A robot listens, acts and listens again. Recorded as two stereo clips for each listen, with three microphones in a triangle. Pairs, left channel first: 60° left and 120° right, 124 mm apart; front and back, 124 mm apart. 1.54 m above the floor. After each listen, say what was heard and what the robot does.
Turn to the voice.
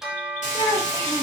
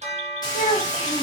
Facing the child speaking, 1 to 2 m away.